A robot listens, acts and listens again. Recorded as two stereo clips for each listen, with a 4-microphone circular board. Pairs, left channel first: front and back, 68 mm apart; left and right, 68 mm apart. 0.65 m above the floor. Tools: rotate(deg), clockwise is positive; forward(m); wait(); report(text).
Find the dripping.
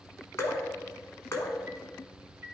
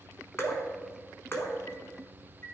rotate(-40)
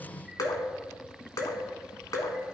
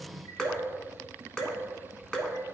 rotate(-10)
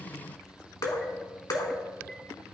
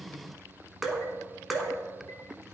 report("Found it: dripping, straight ahead, 1 to 2 m away.")